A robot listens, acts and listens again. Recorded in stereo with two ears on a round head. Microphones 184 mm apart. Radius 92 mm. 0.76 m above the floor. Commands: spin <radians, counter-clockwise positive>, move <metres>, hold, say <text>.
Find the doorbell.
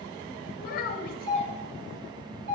spin -0.96
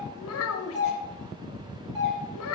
spin -0.52
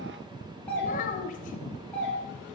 spin 0.17
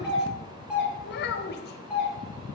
say Facing the doorbell, 2 to 4 m away.